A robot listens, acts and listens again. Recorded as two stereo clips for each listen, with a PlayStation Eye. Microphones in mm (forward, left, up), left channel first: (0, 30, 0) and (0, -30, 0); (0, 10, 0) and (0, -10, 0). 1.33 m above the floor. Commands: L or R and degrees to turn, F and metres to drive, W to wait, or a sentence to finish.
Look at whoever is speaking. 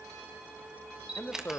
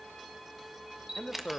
L40
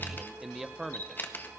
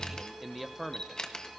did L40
Found it: a man speaking, straight ahead.